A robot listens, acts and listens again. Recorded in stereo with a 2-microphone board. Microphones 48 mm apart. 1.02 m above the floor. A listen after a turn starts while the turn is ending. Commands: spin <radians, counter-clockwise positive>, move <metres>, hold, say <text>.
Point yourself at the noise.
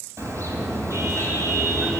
spin -1.22
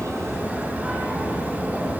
spin -0.61
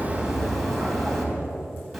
say Facing the car horn.